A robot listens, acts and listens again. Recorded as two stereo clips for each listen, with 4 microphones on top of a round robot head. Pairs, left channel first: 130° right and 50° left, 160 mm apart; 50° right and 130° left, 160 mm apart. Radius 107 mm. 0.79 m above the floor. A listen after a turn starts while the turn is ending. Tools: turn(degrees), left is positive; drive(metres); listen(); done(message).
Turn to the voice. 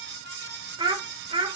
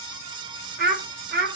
turn(degrees=105)
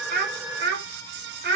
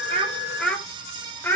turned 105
turn(degrees=30)
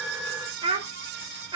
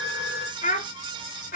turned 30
turn(degrees=-15)
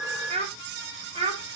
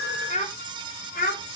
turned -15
turn(degrees=-10)
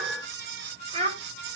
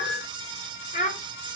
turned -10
done("Facing the child speaking, 2 to 4 m away.")